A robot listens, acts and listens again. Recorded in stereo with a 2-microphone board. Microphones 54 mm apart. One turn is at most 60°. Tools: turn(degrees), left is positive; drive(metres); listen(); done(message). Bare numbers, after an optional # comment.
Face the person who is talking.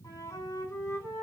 listen()
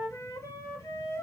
listen()
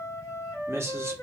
# The man speaking: about 50° right or 130° right.
turn(-50)
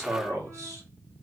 # So it is at 80° right.
turn(-60)
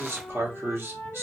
# The man speaking is now 50° right.
turn(-50)
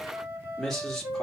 done("Found it: a man speaking, straight ahead, 1 to 2 m away.")